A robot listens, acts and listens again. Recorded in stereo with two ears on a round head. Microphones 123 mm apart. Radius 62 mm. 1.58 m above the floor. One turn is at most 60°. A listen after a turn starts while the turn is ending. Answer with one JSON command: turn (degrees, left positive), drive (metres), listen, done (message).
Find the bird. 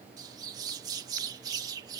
{"turn": -25}
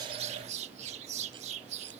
{"turn": -60}
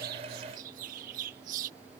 {"turn": -60}
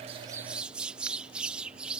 {"turn": -10}
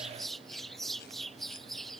{"done": "Facing the bird."}